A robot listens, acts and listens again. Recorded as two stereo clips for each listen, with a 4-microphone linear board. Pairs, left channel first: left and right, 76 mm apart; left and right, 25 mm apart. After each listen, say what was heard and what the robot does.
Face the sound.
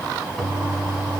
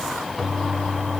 Turn 30° left.
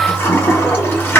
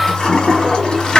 So it is at 155° left. Turn 155° left.
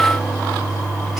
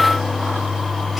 Found it: a toilet flushing, straight ahead, 1 to 2 m away.